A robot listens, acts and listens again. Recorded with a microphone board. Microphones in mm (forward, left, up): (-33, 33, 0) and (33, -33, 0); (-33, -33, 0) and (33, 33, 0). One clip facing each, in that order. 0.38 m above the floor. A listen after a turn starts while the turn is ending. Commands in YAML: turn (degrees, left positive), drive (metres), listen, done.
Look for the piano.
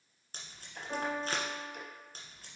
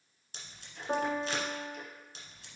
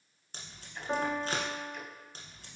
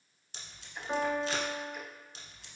turn: -60
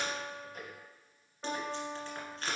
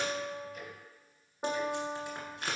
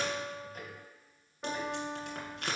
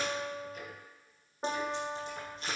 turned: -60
done: "Facing the piano."